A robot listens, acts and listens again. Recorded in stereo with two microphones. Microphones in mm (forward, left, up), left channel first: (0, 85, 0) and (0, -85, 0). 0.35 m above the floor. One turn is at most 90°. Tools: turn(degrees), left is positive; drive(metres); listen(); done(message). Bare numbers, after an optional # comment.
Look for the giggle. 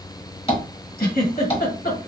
# The giggle: about 60° left or 120° left.
turn(60)
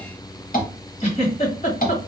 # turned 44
# So it is at 50° left.
turn(50)
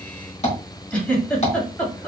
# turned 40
# The giggle is now 10° left.
turn(10)
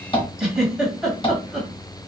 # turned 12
done("Facing the giggle.")